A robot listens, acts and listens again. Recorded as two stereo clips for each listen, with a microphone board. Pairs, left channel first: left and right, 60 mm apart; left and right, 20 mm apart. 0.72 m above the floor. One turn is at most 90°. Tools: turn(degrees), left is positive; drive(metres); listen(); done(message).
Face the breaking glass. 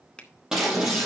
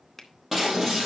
turn(degrees=-30)
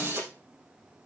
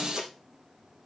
turn(degrees=-90)
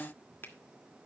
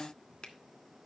turn(degrees=-55)
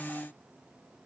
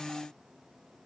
done("Facing where the breaking glass came from. I can't hear it now.")